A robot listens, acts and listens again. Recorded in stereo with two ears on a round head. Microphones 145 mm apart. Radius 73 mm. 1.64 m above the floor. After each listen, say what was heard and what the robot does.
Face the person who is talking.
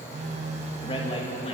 The man speaking: about 35° left or 145° left. Turn 35° left.
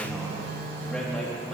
Facing the man speaking, 2 to 4 m away.